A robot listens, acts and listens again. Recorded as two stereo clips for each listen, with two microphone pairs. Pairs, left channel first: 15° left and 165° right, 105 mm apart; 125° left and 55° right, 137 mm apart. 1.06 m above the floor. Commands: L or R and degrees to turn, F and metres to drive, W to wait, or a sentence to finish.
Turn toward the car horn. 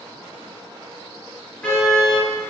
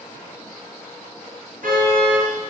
R65
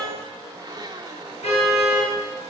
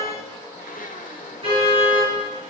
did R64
Facing the car horn, over 4 m away.